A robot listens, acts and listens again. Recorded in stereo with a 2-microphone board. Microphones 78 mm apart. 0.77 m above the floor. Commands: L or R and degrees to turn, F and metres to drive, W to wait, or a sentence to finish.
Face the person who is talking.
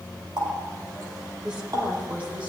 R20
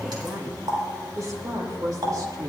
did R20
R120
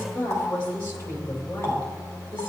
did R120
L30
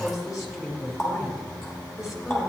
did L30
Found it: a woman speaking, straight ahead, 2 to 4 m away.